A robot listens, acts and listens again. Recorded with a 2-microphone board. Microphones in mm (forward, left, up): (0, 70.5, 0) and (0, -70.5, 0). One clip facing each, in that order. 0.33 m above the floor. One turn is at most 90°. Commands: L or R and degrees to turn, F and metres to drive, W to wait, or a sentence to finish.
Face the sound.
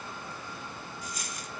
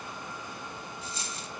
R30
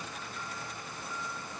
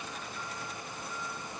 W
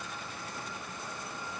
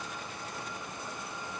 I heard a dropped coin, but can't make it out now. It was about straight ahead or 120° right.